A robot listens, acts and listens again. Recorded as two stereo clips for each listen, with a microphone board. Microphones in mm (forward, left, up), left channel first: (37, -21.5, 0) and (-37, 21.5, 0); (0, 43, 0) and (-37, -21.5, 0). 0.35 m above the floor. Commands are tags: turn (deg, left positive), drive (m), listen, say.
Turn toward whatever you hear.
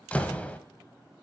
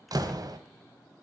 <turn deg="-105"/>
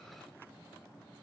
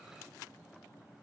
<say>Facing where the door slam came from. I can't hear it now.</say>